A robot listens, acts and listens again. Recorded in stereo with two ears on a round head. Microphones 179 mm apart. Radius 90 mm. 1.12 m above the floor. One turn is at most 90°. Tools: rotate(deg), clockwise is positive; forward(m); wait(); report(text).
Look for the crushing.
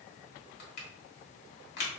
rotate(-55)
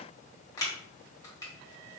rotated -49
rotate(-20)
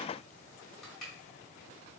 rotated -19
report("Facing the crushing, 1 to 2 m away.")